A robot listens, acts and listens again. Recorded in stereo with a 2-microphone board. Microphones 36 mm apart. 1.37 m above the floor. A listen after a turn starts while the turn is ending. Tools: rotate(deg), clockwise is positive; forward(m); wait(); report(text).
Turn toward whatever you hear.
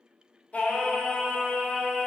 rotate(-25)
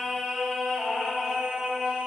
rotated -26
rotate(30)
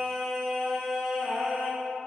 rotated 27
rotate(25)
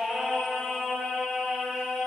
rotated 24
rotate(10)
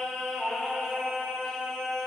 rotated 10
report("Found it: singing, straight ahead.")